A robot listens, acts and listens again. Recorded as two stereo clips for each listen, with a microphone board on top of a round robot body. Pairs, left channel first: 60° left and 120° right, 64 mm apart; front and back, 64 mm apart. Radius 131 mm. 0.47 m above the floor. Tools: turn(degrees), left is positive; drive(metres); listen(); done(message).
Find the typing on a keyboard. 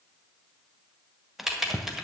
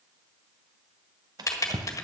turn(degrees=-40)
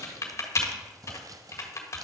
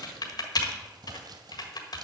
turn(degrees=15)
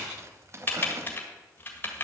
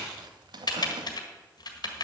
done("Found it: typing on a keyboard, straight ahead.")